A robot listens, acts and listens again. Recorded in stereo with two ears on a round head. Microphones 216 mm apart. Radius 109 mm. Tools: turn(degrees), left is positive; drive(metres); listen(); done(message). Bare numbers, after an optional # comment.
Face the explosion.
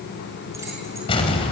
# The explosion: about 20° left or 160° left.
turn(20)
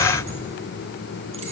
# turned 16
# So it is at 10° left.
turn(10)
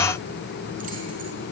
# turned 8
done("Facing where the explosion came from. I can't hear it now.")